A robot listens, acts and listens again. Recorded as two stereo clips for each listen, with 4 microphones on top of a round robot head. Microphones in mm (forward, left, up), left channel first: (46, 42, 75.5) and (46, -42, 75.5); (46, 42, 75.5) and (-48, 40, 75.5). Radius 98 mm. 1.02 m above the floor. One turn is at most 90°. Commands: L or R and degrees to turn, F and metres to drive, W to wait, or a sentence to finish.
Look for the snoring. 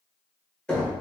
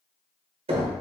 W
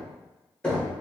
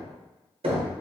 W
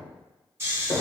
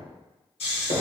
R30
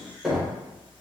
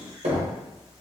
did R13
R20
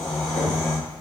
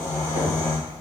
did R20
Found it: snoring, straight ahead.